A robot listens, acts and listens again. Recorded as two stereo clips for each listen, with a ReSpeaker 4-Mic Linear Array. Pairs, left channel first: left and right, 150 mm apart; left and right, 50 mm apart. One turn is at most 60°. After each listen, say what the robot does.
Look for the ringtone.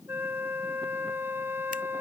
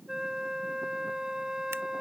Keep listening.
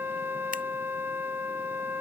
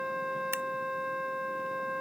Keep listening.
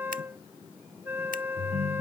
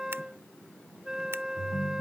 Turn 50° right.
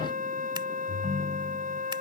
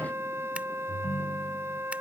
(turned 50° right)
Found it: a ringtone, straight ahead.